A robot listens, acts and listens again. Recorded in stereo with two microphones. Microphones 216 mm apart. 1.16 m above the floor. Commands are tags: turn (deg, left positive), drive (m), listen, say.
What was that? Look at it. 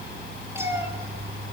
<turn deg="-30"/>
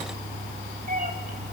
<turn deg="-140"/>
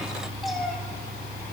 <say>Found it: a cat meowing, straight ahead.</say>